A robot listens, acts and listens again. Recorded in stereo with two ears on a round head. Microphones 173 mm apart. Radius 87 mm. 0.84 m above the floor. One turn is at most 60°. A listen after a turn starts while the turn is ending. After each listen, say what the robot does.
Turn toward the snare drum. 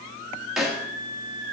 Turn 30° left.
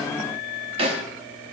Turn 30° right.
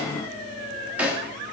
Facing the snare drum, under 1 m away.